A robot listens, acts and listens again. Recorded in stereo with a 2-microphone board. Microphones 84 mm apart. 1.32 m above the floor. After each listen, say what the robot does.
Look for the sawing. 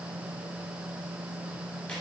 Keep listening.
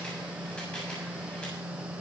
Keep listening.
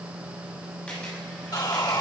Turn 55° left.
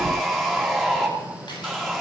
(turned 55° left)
Facing the sawing.